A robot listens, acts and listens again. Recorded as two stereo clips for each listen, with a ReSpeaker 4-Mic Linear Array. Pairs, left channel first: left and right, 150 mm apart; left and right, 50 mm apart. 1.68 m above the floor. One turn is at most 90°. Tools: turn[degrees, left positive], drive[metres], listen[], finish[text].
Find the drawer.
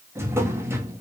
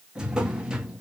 Thought: The drawer: about 15° right or 165° right.
Action: turn[-15]
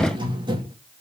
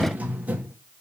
Thought: So it is at 150° right.
Action: turn[-90]
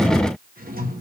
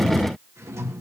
Thought: The drawer is now 85° right.
Action: turn[-85]
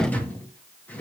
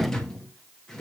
Thought: The drawer is now 10° left.
Action: turn[10]
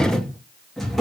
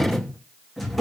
Action: finish[Found it: a drawer, straight ahead.]